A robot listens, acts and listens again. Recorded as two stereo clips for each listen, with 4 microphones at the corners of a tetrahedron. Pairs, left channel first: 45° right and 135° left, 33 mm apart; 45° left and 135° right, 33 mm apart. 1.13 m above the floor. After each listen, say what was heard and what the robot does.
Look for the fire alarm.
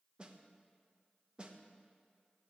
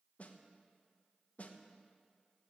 Keep listening.
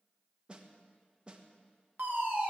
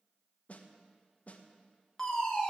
The fire alarm: 115° left. Turn 115° left.
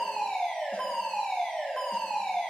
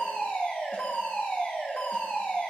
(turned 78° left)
The fire alarm is now 35° left. Turn 35° left.
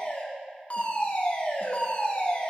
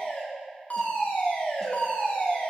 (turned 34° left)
Found it: a fire alarm, straight ahead, 2 to 4 m away.